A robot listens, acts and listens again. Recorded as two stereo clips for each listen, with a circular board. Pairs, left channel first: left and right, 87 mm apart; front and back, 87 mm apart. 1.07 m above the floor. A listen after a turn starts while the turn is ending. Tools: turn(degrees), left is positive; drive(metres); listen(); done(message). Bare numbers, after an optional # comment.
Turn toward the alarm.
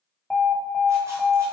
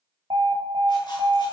# The alarm: 175° left.
turn(175)
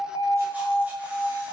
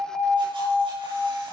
# The alarm is now 45° left.
turn(45)
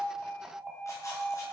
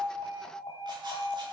done("Found it: an alarm, straight ahead.")